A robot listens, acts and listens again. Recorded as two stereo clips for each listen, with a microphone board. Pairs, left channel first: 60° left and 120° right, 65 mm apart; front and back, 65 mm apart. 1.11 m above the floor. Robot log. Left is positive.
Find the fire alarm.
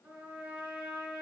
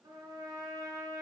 cmd idle
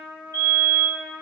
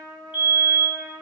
note: The fire alarm: 120° right.
cmd yaw -120
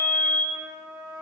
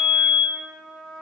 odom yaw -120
note: The fire alarm is now 20° right.
cmd yaw -20
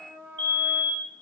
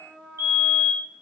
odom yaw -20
end: Found it: a fire alarm, straight ahead.